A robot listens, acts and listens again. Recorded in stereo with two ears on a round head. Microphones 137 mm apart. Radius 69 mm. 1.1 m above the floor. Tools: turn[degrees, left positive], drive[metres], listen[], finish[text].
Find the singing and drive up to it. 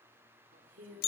Thought: The singing: about 60° right or 120° right.
Action: turn[-60]
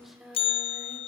Action: drive[1.0]
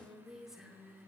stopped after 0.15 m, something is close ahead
Action: finish[Something is in my way. I am facing the singing but have not reached it.]